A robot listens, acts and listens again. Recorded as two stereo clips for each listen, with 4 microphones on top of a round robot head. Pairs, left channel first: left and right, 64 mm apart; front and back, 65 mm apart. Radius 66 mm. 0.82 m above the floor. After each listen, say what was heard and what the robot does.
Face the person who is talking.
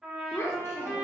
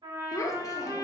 The child speaking: 30° left. Turn 30° left.
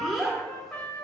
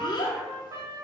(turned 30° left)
Found it: a child speaking, straight ahead, under 1 m away.